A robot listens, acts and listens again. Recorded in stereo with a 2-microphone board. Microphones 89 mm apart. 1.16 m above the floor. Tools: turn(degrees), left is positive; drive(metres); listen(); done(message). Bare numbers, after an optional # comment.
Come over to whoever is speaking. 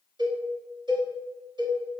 listen()
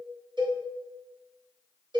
listen()
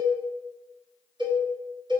done("I can't make out anyone speaking to turn to.")